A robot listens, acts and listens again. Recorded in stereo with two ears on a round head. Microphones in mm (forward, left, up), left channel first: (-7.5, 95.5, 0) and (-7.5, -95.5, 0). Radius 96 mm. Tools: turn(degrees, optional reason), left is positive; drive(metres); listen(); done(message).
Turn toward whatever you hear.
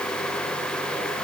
listen()
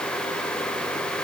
listen()
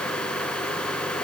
done("I can't make out anything.")